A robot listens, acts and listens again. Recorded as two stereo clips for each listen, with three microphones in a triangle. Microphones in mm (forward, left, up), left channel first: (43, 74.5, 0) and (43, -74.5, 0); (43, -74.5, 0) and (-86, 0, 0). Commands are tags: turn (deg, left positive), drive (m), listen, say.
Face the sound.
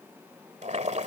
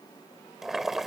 <turn deg="-125"/>
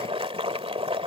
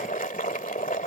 <turn deg="-40"/>
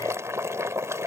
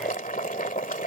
<turn deg="-20"/>
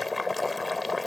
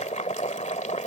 <say>Found it: boiling, straight ahead.</say>